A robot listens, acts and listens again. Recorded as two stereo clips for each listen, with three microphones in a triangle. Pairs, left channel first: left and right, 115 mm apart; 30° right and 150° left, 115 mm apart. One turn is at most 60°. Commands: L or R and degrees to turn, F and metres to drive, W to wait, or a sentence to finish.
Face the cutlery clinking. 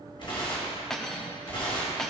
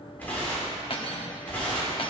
Found it: cutlery clinking, straight ahead.